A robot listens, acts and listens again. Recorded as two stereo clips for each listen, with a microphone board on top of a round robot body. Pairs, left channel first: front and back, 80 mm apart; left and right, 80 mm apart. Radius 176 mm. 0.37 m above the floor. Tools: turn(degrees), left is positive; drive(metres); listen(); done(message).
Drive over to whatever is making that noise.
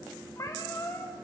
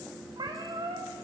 turn(degrees=-55)
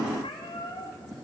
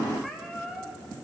drive(metres=1.0)
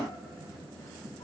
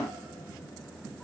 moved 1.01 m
drive(metres=1.0)
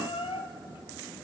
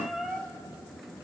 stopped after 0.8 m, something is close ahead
done("Arrived at the cat meowing, straight ahead.")